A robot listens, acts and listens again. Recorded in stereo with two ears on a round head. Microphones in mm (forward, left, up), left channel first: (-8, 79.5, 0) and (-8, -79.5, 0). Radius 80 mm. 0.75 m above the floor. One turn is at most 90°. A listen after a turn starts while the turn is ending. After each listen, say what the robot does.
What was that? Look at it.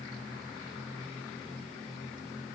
Keep listening.
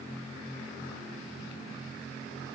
Keep listening.
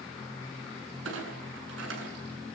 Turn 90° right.
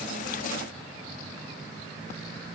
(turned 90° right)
I heard a clunk from this way, but can't make it out now.